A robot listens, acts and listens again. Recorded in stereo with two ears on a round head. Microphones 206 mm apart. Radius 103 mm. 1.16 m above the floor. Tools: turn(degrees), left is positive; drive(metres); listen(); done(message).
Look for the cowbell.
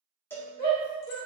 turn(degrees=30)
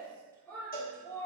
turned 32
turn(degrees=140)
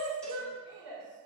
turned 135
listen()
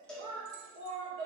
done("Facing the cowbell.")